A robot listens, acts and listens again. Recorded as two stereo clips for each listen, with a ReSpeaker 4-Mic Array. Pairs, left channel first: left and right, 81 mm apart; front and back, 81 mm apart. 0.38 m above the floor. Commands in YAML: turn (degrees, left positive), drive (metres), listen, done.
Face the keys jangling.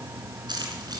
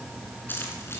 turn: -60
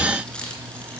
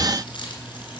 turn: 15
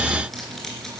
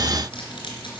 done: "Facing the keys jangling, 2 to 4 m away."